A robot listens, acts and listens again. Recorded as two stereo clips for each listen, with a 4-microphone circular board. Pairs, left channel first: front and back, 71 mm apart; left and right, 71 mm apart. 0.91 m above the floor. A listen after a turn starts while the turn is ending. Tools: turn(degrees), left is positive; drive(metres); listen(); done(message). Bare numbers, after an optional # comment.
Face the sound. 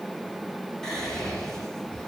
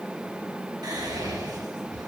# The whispering: 80° right.
turn(-80)
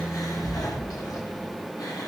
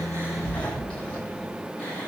# The whispering is now 20° left.
turn(20)
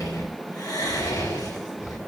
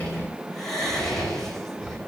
done("Found it: whispering, straight ahead, over 4 m away.")